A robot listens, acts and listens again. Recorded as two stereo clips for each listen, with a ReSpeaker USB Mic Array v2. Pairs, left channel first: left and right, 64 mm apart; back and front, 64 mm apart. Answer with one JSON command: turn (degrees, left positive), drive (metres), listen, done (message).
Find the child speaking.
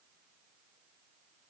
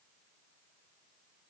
{"listen": true}
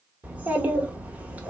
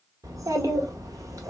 {"turn": -25}
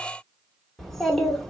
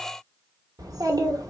{"done": "Facing the child speaking, 1 to 2 m away."}